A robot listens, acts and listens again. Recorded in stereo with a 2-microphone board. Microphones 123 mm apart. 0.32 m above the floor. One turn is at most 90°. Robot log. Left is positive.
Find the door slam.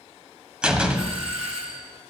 cmd yaw -30
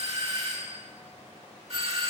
cmd idle
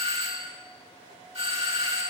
end: I heard a door slam, but can't make it out now. It was about 20° left or 140° right.